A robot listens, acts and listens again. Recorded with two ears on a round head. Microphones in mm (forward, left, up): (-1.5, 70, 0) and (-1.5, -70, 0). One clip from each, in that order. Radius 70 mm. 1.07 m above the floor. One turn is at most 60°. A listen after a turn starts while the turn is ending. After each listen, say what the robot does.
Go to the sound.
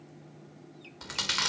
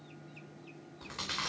Turn 60° left.
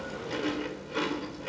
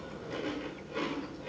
Turn 30° left.
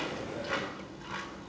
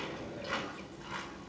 Drive 1.0 m forward.
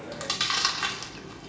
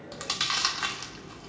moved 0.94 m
Drive 1.0 m forward.
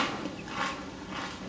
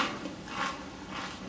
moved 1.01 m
Turn 10° right.
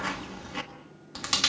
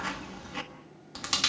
Drive 1.0 m forward.
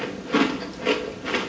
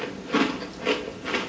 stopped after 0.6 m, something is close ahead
Arrived at the chewing, straight ahead.